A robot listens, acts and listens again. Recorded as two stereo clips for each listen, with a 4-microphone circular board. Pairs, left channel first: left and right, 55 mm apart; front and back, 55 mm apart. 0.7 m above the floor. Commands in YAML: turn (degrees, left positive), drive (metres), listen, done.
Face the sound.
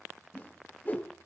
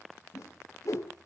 turn: 30
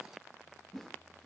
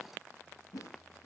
done: "Found it: a whoosh, straight ahead, 1 to 2 m away."